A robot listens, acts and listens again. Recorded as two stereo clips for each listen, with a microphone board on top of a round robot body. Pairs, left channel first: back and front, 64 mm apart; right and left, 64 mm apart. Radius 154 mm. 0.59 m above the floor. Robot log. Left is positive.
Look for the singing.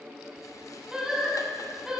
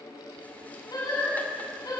note: The singing: 85° right.
cmd yaw -85
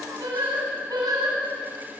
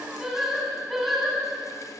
end: Facing the singing, over 4 m away.